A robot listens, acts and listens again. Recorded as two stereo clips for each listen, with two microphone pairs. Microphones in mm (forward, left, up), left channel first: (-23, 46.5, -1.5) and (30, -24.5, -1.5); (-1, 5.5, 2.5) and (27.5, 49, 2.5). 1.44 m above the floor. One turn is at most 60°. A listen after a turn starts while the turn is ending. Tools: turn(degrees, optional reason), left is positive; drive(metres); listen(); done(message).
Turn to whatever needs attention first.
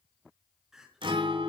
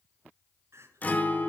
turn(degrees=30, reason="The crying: 30° left.")
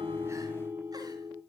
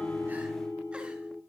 listen()
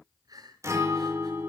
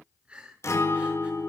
turn(degrees=-10, reason="The crying is now 10° right.")
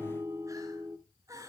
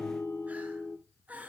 done("Facing the crying, over 4 m away.")